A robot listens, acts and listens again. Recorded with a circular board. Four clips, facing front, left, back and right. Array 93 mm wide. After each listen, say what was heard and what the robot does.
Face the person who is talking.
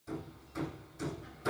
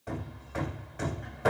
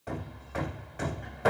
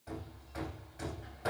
Keep listening.
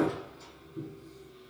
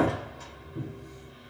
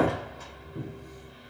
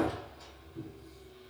Keep listening.
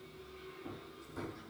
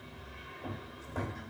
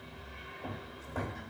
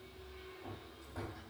I can't make out anyone speaking to turn to.